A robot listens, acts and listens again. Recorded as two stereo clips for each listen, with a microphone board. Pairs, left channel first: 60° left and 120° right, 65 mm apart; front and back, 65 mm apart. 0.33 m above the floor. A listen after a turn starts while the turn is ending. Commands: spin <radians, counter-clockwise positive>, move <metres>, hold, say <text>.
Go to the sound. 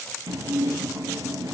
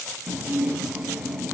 spin -1.83
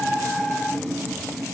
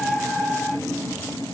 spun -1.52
spin -0.35
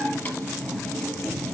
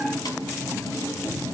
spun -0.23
move 1.0
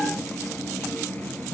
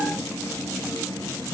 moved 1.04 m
move 1.0
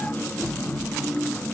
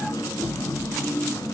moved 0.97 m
move 1.0
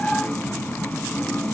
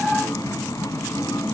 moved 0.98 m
move 1.0
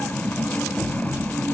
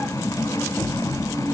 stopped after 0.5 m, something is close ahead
say Arrived at the dishes clattering, straight ahead.